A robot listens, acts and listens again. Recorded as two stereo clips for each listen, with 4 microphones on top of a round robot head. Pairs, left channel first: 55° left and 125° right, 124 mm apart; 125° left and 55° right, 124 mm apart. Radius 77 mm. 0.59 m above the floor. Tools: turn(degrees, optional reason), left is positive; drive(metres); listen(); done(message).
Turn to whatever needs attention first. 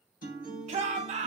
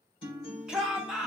turn(degrees=-140, reason="The shout: 140° right.")
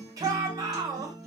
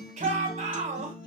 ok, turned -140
turn(degrees=-70, reason="The shout is now 70° right.")
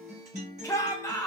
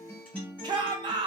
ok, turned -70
done("Found it: a shout, straight ahead, 1 to 2 m away.")